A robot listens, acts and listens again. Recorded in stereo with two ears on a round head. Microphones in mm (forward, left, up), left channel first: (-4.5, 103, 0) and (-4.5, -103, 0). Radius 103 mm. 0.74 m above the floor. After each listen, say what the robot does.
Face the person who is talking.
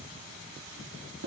Keep listening.
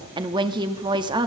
Turn 20° right.
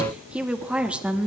Facing the woman speaking, 1 to 2 m away.